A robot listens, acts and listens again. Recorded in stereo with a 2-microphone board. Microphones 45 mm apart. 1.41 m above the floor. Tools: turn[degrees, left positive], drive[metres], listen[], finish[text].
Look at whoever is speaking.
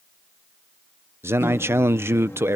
Thought: The man speaking: about 75° right or 105° right.
Action: turn[-75]
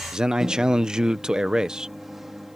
Thought: So it is at 20° right.
Action: turn[-20]
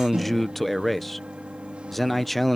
Action: finish[Facing the man speaking.]